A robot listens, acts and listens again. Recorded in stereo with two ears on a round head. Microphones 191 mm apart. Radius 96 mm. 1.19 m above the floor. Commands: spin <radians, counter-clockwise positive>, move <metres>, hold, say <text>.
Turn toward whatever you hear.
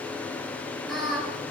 spin 0.52
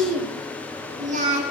spin -0.61
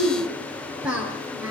say Found it: singing, straight ahead, over 4 m away.